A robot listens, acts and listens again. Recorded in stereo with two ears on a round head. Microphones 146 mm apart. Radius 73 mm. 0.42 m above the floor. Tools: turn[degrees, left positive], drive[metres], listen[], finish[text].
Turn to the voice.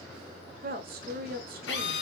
Thought: The woman speaking: about 60° right or 120° right.
Action: turn[-60]
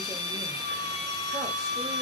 Action: listen[]
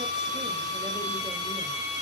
Action: listen[]
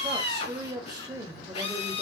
Thought: So it is at 30° right.
Action: turn[-30]
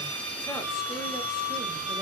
Action: listen[]
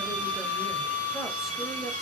Action: listen[]
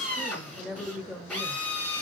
Action: finish[Facing the woman speaking, 1 to 2 m away.]